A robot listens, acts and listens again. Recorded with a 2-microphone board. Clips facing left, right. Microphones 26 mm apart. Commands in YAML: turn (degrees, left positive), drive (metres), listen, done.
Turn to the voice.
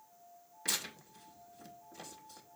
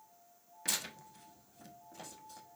listen: true
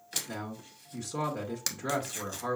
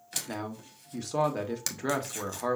turn: -35
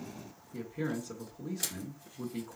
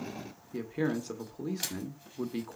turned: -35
turn: -105
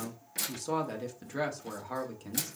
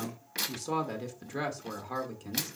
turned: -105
done: "Found it: a man speaking, straight ahead."